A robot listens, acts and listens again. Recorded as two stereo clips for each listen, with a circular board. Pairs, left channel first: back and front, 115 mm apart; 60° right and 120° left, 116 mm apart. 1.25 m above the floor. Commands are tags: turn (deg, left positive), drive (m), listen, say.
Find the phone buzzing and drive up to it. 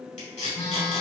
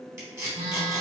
<turn deg="125"/>
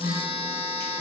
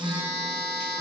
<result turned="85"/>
<turn deg="45"/>
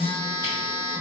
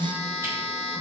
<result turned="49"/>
<drive m="1.0"/>
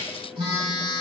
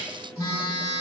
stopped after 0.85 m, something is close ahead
<turn deg="-10"/>
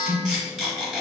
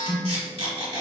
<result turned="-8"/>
<say>I am next to the phone buzzing.</say>